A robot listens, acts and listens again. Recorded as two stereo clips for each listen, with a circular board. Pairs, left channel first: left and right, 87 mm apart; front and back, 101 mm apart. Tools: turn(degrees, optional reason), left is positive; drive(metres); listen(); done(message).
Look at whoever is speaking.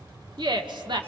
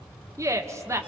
turn(degrees=-120, reason="The woman speaking: 120° right.")
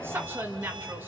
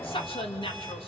turn(degrees=-25, reason="The woman speaking is now 25° right.")
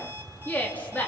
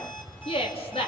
turn(degrees=20, reason="The woman speaking is now 20° left.")
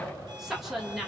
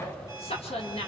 done("Facing the woman speaking, over 4 m away.")